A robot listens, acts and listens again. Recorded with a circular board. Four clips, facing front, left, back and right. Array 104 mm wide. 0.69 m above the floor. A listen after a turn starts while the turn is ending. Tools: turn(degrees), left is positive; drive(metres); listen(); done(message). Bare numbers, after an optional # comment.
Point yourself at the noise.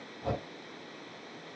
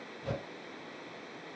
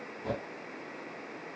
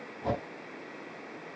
# The whoosh: 80° right.
turn(-80)
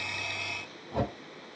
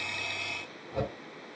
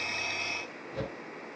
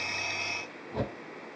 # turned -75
done("Facing the whoosh, 2 to 4 m away.")